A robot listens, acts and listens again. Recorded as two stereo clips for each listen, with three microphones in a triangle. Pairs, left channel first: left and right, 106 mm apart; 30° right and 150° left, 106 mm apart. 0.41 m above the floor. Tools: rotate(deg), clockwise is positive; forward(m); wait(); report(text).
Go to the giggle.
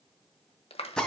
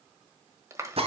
wait()
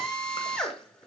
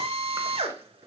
wait()
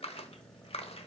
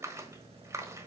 report("I can't make out a giggle to turn to.")